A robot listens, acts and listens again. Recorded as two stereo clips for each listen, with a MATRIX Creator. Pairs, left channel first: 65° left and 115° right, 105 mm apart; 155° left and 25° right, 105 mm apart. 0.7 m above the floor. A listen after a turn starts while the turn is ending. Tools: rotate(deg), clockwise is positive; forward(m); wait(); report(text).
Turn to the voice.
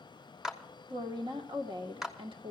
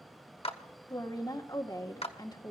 rotate(150)
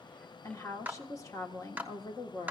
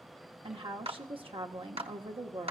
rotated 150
rotate(-10)
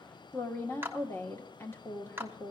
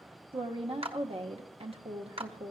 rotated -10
report("Found it: a woman speaking, straight ahead.")